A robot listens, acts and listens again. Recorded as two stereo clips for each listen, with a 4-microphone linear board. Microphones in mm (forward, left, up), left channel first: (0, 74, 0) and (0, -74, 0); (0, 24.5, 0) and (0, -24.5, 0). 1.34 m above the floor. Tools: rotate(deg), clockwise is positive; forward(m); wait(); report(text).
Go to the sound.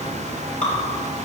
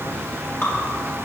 rotate(-55)
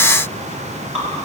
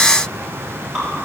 forward(1.0)
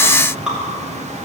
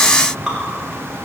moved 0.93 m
forward(1.0)
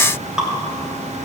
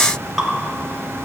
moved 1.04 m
forward(1.0)
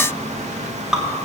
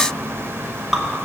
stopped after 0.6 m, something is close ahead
report("Arrived at the dripping, straight ahead.")